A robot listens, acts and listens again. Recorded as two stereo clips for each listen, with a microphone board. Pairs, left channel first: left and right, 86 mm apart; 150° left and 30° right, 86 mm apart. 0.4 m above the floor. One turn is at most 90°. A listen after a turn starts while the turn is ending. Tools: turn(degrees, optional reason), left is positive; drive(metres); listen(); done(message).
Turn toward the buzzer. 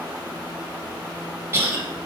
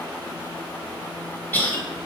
listen()
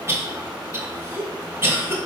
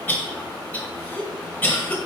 listen()
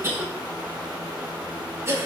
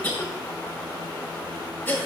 done("I can't make out a buzzer to turn to.")